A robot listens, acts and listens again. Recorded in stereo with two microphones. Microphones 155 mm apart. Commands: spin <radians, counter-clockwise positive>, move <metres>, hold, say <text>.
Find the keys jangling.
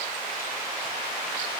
hold
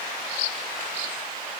hold
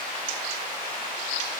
say I can't make out keys jangling.